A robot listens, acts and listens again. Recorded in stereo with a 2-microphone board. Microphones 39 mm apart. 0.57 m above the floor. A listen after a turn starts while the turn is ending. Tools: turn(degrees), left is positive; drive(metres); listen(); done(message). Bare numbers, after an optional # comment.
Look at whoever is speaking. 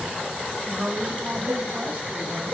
# The woman speaking: about 35° right or 145° right.
turn(-35)
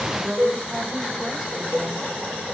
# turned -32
# So it is at 15° right.
turn(-15)
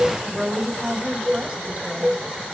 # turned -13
# The woman speaking is now 20° right.
turn(-20)
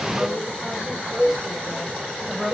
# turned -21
# The woman speaking is now 10° right.
turn(-10)
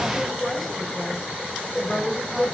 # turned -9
done("Found it: a woman speaking, straight ahead.")